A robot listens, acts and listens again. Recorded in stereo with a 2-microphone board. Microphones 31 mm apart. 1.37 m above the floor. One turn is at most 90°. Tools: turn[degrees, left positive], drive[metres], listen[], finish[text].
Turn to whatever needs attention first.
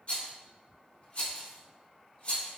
Action: listen[]
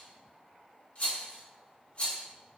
Action: listen[]
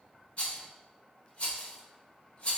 Action: finish[I can't make out anything urgent to turn to.]